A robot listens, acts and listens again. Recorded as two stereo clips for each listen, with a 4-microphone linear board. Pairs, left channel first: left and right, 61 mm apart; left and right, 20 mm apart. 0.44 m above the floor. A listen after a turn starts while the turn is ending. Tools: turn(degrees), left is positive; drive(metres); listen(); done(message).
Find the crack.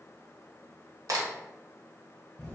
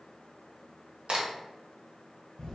turn(degrees=-65)
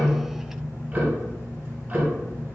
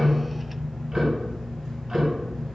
listen()
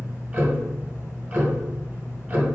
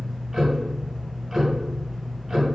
done("I heard a crack, but can't make it out now. It was about straight ahead or 50° right.")